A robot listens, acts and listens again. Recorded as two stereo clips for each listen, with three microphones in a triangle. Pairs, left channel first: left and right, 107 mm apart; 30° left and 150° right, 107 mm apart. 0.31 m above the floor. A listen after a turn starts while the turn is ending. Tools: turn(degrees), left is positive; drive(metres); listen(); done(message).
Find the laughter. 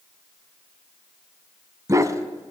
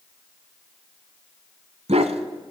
listen()
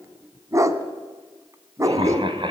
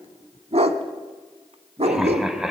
turn(degrees=-65)
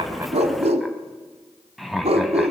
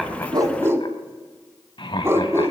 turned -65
done("Found it: laughter, straight ahead, 1 to 2 m away.")